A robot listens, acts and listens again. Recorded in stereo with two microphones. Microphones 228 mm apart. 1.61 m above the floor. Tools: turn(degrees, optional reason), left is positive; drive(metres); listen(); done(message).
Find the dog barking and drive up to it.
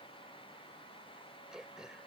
listen()
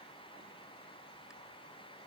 listen()
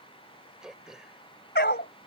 turn(degrees=50, reason="The dog barking: about 50° left or 130° left.")
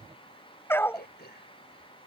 turn(degrees=10, reason="So it is at 10° left.")
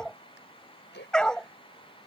drive(metres=1.0)
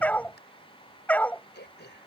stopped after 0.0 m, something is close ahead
done("Blocked. The dog barking is further on, straight ahead.")